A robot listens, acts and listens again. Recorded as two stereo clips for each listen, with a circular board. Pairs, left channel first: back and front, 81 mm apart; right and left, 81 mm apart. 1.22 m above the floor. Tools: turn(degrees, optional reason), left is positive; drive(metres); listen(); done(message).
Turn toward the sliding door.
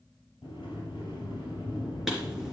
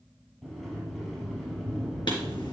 turn(degrees=-175, reason="The sliding door: 175° right.")
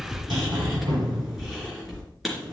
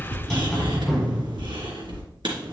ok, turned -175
done("Found it: a sliding door, straight ahead, over 4 m away.")